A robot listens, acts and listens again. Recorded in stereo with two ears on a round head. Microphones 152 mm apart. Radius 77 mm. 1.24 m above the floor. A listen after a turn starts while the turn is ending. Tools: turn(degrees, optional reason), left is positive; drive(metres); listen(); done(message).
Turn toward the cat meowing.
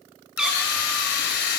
turn(degrees=-30)
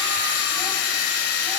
listen()
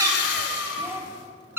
turn(degrees=-30)
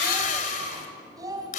listen()
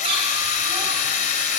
listen()
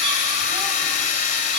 done("I heard a cat meowing, but can't make it out now. It was about 15° left or 135° right.")